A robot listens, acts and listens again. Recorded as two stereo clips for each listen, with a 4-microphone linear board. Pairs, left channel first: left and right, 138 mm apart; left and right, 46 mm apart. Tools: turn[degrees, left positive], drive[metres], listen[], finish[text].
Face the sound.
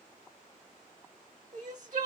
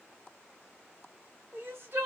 Thought: The crying: about 60° right or 120° right.
Action: turn[-60]
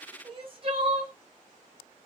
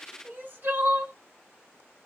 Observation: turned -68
Thought: So it is at 45° right.
Action: turn[-45]
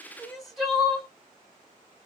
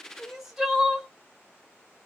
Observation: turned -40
Action: finish[Facing the crying.]